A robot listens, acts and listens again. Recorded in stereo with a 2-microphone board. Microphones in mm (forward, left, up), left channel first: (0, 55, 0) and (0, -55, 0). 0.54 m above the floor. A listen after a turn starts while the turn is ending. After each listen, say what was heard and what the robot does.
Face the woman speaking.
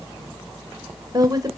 The woman speaking: about 35° right or 145° right. Turn 35° right.
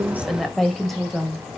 Facing the woman speaking.